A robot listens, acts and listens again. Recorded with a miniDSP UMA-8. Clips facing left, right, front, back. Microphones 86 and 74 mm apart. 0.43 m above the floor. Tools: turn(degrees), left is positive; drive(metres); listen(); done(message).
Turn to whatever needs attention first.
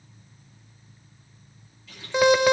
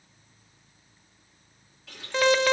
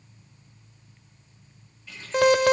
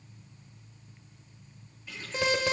turn(degrees=15)
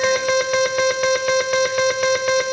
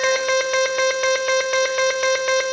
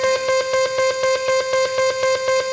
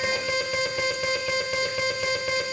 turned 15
done("Found it: an alarm, straight ahead, 1 to 2 m away.")